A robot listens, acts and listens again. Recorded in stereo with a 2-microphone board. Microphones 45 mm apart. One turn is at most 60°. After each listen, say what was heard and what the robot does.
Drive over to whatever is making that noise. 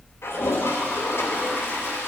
Turn 60° left.
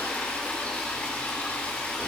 So it is at 30° left. Turn 30° left.
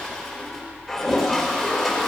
Drive 1.0 m forward.
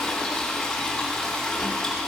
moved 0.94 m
Drive 1.0 m forward.
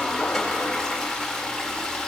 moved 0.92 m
The toilet flushing is now 10° left. Turn 10° left.
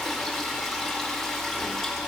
Drive 1.0 m forward.
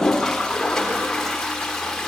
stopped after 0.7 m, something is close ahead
The toilet flushing is now 10° left. Turn 10° left.
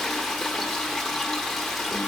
I am next to the toilet flushing.